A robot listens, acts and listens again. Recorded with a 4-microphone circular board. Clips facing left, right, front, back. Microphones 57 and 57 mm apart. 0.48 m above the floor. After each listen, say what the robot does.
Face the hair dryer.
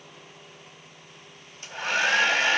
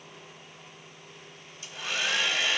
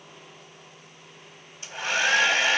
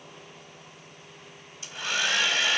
Turn 50° left.
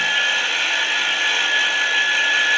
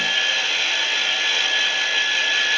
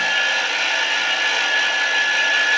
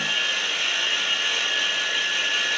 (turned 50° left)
Turn 15° left.
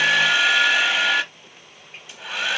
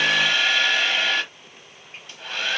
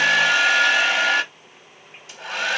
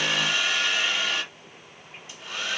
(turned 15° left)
Turn 10° left.
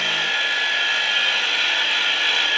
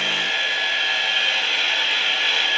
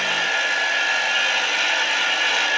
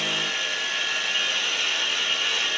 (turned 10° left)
Facing the hair dryer.